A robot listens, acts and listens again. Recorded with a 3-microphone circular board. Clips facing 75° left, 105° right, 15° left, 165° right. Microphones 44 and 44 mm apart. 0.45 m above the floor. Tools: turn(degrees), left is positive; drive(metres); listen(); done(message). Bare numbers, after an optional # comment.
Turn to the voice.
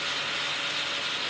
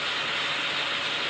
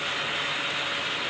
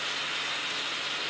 listen()
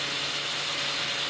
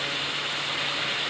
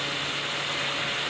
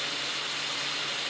listen()
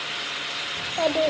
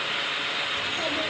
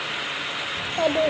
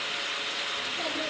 # The child speaking: 35° left.
turn(35)
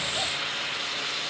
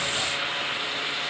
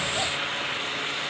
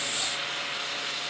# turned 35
listen()
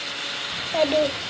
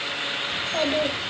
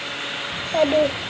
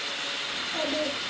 done("Found it: a child speaking, straight ahead, under 1 m away.")